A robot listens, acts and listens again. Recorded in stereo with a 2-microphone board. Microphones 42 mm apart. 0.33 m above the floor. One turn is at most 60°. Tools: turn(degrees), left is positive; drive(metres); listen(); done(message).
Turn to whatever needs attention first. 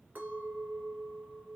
listen()
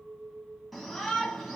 turn(degrees=30)
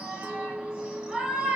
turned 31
turn(degrees=-30)
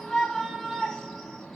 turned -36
done("Facing the shout, 2 to 4 m away.")